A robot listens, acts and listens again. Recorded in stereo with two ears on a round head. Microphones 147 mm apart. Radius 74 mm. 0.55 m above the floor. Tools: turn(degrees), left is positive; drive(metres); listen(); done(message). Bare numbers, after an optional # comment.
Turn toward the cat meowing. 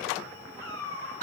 # The cat meowing: about 20° left or 160° left.
turn(20)
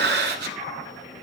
listen()
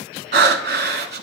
listen()
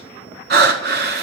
done("I heard a cat meowing, but can't make it out now. It was about straight ahead or 140° left.")